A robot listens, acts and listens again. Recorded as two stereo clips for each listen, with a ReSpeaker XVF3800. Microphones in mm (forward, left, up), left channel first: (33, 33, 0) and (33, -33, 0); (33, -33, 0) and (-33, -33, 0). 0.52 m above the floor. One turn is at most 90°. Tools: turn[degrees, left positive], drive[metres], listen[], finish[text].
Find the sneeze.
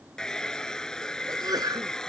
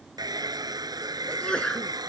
Thought: The sneeze: 75° right.
Action: turn[-75]
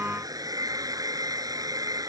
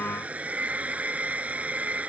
Action: finish[Facing where the sneeze came from. I can't hear it now.]